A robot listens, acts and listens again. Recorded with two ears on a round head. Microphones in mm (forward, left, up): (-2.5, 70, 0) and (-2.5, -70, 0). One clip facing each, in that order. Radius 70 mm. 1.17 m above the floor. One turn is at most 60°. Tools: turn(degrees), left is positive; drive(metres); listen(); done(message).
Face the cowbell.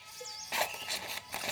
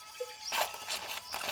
turn(degrees=-60)
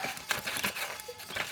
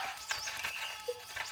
turn(degrees=-50)
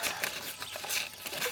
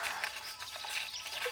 listen()
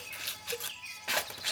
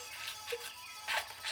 listen()
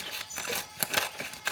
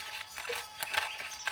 done("Facing where the cowbell came from. I can't hear it now.")